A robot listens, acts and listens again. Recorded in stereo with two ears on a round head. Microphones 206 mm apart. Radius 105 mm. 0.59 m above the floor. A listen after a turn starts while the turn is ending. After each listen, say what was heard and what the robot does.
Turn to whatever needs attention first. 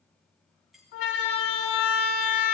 The siren: about 60° left or 120° left. Turn 60° left.
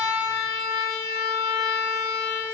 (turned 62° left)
So it is at 50° left. Turn 50° left.
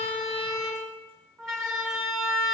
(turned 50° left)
Found it: a siren, straight ahead.